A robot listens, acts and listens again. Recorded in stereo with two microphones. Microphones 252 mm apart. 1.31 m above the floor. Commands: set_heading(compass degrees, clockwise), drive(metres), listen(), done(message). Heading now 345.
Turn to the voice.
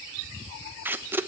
listen()
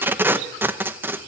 listen()
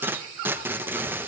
done("I can't make out anyone speaking, only tape being pulled.")